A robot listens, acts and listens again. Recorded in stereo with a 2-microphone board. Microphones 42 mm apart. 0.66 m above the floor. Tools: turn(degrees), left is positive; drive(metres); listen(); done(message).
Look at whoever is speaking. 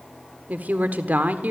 turn(degrees=-45)
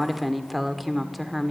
done("Facing the woman speaking.")